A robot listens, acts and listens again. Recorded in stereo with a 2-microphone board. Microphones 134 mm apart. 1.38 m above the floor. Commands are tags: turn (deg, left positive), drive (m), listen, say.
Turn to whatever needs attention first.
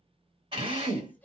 <turn deg="30"/>
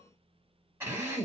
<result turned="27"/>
<listen/>
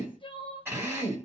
<turn deg="140"/>
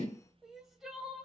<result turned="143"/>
<say>Facing the crying, 1 to 2 m away.</say>